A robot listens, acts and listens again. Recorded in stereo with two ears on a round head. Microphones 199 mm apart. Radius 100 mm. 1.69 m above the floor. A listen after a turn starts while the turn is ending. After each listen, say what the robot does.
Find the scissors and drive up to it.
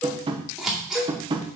Turn 30° left.
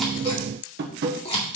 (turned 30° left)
Turn 150° left.
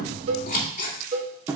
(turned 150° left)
Turn 40° left.
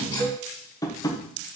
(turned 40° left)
Keep listening.
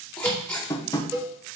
Drive 1.0 m forward.
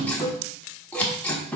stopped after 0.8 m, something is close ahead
Turn 10° left.
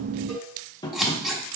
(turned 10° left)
Arrived at the scissors, straight ahead.